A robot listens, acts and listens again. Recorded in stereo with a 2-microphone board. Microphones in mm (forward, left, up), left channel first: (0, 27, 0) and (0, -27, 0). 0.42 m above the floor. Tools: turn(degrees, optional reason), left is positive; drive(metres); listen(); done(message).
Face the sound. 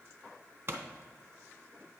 turn(degrees=-45, reason="The pop: about 45° right or 135° right.")
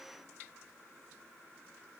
listen()
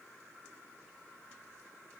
done("I heard a pop, but can't make it out now. It was about straight ahead or 90° right.")